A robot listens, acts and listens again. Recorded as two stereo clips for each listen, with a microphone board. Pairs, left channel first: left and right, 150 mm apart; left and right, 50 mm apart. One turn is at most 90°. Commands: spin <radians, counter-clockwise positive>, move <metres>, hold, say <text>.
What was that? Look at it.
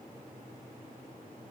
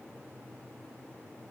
hold
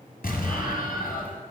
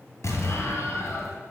spin 1.57
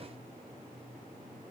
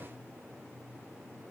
say Facing where the explosion came from. I can't hear it now.